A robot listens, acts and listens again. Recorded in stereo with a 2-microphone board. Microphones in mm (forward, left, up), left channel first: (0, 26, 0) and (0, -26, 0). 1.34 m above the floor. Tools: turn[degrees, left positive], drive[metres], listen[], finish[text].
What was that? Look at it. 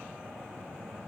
Action: listen[]
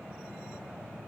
Action: listen[]
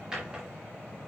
Thought: The drawer: about 15° right or 165° right.
Action: turn[-15]
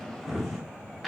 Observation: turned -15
Action: finish[Facing the drawer.]